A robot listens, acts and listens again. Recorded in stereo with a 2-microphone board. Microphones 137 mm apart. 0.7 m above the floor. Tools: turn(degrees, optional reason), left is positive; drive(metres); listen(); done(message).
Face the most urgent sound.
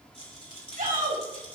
turn(degrees=-75, reason="The shout: about 75° right or 105° right.")
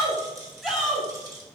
done("Facing the shout, over 4 m away.")